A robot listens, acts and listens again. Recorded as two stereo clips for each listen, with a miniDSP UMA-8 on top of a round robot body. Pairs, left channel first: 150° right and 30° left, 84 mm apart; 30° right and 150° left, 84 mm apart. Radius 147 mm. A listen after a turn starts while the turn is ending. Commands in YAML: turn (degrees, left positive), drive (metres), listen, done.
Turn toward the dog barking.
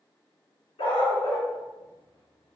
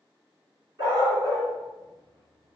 turn: -165
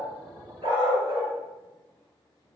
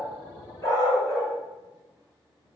turn: 25
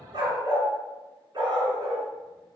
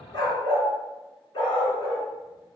turn: -10
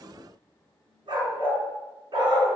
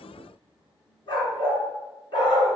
done: "Found it: a dog barking, straight ahead."